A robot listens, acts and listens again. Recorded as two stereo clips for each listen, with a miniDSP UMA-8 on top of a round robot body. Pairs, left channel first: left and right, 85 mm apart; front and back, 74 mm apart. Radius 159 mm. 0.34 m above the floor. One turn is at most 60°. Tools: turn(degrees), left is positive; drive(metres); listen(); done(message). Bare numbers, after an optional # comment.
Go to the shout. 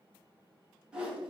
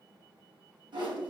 listen()
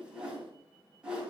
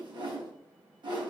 listen()
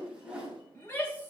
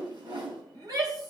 # The shout: 155° left.
turn(60)
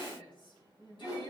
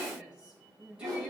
# The shout is now 100° left.
turn(60)
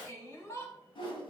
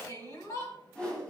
# The shout is now 35° left.
turn(35)
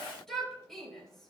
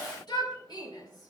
drive(1.0)
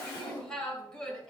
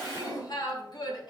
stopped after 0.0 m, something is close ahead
# The shout is now 10° left.
turn(10)
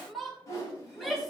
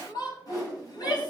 done("Something is in my way. I am facing the shout but have not reached it.")